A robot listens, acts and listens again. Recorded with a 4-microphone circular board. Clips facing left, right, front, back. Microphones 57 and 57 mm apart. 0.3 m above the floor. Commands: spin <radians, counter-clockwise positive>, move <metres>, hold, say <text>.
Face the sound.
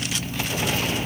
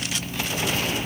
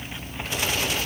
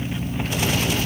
hold
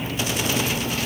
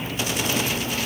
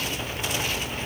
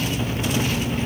hold
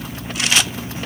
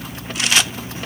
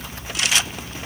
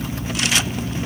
say I can't make out anything to turn to.